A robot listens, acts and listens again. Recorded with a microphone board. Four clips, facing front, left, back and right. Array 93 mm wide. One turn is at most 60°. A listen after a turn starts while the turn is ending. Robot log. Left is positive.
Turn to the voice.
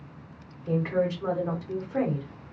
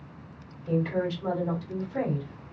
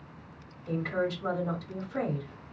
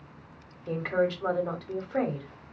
note: The woman speaking: 65° right.
cmd yaw -60
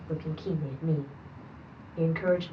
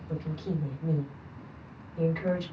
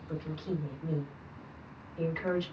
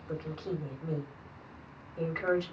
note: The woman speaking is now 25° right.
cmd yaw -25
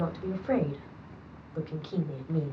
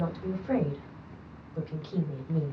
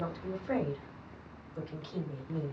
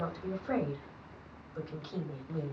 end: Found it: a woman speaking, straight ahead, 1 to 2 m away.